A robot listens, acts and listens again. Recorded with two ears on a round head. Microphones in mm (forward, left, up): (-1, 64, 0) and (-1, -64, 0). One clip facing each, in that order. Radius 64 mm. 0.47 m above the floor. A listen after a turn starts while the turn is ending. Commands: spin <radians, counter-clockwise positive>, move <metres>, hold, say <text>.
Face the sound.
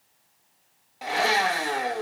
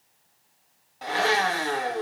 spin 0.52
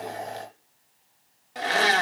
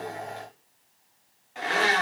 spin 2.36
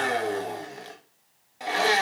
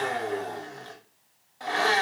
spin 0.35
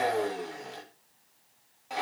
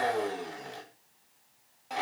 say Facing the blender, 1 to 2 m away.